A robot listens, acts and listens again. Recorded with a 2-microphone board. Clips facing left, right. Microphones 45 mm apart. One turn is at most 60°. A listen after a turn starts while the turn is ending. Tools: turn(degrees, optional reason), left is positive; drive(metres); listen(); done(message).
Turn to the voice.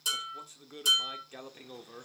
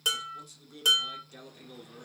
turn(degrees=40, reason="The man speaking: about 40° left or 140° left.")
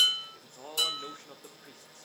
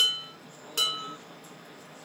turn(degrees=60, reason="So it is at 95° left.")
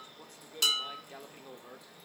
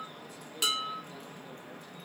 turn(degrees=35, reason="Nothing new. It was at 35° left.")
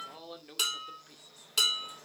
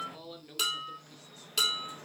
turn(degrees=15, reason="The man speaking is now 15° left.")
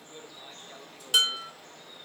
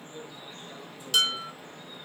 listen()
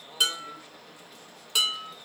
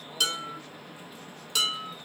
listen()
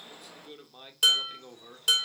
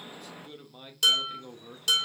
done("Found it: a man speaking, straight ahead, under 1 m away.")